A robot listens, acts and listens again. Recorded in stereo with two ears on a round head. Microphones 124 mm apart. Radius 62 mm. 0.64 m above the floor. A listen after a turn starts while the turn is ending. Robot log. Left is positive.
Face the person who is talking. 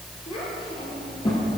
note: The child speaking: about 40° left or 140° left.
cmd yaw +40
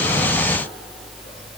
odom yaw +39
cmd idle
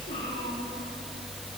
cmd idle
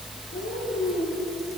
note: So it is at 100° left.
cmd yaw +100
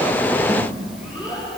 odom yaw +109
note: The child speaking is now 10° right.
cmd yaw -10
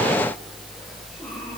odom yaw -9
cmd idle
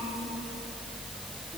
cmd idle
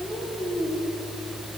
end: Facing the child speaking, over 4 m away.